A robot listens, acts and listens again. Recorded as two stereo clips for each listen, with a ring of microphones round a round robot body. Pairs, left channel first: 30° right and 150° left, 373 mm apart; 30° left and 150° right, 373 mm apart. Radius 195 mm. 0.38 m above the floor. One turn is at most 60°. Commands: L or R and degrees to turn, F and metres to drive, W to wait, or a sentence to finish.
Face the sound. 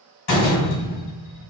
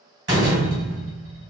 R60
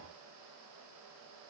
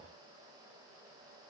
R10
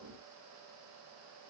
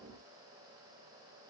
I heard a door slam from this way, but can't make it out now.